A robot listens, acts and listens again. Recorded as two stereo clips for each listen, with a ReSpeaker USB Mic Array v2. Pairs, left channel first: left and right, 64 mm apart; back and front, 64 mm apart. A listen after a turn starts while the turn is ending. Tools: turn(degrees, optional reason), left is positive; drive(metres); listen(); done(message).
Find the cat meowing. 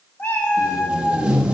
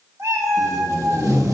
turn(degrees=30, reason="The cat meowing: 30° left.")
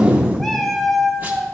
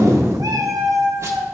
done("Found it: a cat meowing, straight ahead.")